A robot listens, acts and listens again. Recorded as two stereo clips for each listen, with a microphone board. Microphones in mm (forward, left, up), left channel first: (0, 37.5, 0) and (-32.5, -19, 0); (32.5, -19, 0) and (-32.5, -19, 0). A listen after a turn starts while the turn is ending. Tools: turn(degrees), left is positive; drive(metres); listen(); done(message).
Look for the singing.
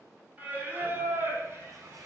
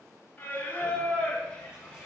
turn(degrees=-70)
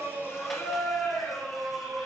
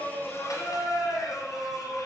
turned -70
turn(degrees=-25)
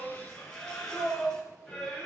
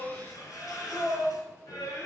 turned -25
turn(degrees=-25)
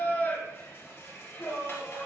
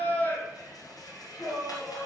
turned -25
done("Facing the singing.")